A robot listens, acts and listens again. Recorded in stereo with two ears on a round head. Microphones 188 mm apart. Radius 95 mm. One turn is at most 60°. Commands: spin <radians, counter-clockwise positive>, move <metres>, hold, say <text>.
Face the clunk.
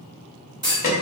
spin -0.35
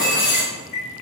say Facing the clunk.